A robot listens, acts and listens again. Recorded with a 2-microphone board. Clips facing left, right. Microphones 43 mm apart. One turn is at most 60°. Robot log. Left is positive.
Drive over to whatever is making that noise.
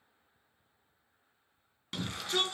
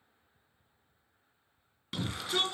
cmd yaw +30
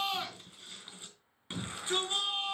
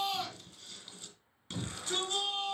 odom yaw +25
note: So it is at 155° left.
cmd yaw +60
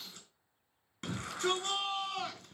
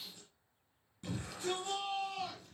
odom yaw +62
note: The shout is now 95° left.
cmd yaw +60
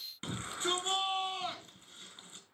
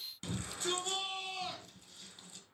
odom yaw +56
note: The shout is now 35° left.
cmd yaw +35
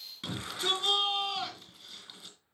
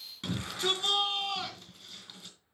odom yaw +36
cmd fwd 1.0
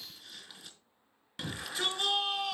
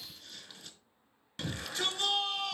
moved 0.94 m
cmd fwd 1.0
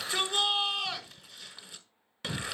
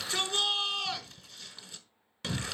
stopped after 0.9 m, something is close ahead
end: I am next to the shout.